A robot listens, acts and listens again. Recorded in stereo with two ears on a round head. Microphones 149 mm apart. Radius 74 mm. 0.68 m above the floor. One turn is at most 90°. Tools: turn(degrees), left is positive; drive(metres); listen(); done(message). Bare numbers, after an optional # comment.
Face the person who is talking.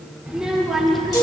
turn(30)
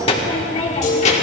# So it is at 135° left.
turn(90)
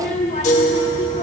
# The child speaking is now 40° left.
turn(40)
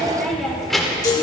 done("Facing the child speaking, 1 to 2 m away.")